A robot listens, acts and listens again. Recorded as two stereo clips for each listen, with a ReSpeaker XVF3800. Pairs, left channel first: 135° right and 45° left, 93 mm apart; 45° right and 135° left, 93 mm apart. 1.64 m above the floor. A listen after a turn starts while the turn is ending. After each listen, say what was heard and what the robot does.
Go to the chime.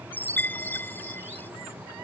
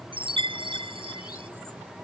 The chime: 155° left. Turn 155° left.
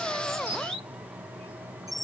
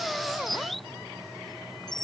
Drive 1.0 m forward.
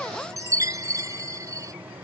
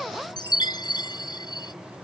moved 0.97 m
Drive 1.0 m forward.
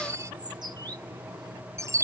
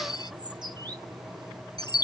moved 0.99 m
The chime is now 10° right. Turn 10° right.
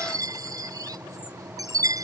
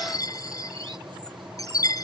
Drive 1.0 m forward.
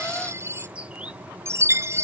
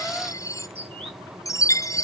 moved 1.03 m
Drive 1.0 m forward.
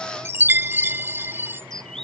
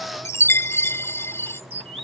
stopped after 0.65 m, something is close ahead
I am next to the chime.